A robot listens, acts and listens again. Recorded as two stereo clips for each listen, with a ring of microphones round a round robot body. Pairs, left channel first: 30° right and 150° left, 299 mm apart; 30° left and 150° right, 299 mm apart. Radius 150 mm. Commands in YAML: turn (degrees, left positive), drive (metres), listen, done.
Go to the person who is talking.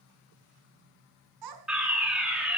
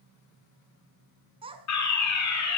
turn: 135
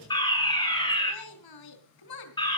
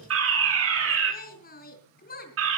turn: -30
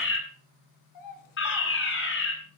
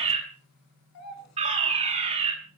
drive: 1.0
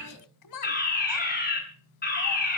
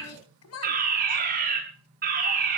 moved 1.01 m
turn: -10
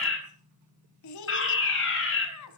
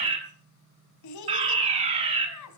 drive: 1.0
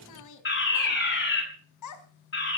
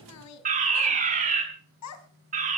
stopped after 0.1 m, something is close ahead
done: "Something is in my way. I am facing the child speaking but have not reached it."